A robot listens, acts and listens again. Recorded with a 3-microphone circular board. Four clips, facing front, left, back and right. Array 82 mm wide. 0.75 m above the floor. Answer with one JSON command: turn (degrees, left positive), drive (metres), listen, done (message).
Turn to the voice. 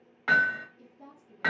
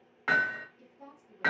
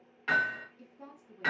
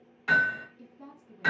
{"turn": -170}
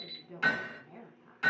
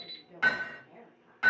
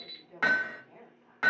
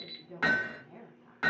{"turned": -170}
{"turn": -25}
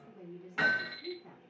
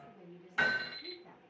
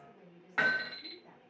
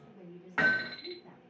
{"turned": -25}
{"turn": 15}
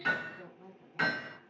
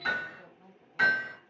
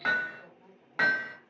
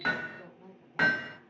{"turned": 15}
{"done": "Facing the woman speaking, 1 to 2 m away."}